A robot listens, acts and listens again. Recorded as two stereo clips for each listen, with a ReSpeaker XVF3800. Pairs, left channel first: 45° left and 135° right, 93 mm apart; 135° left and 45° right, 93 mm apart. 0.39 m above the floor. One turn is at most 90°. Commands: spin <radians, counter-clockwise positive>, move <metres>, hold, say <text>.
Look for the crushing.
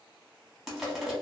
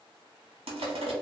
spin -0.87
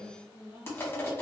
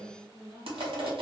spin -0.35
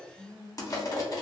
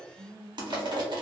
say Found it: crushing, straight ahead.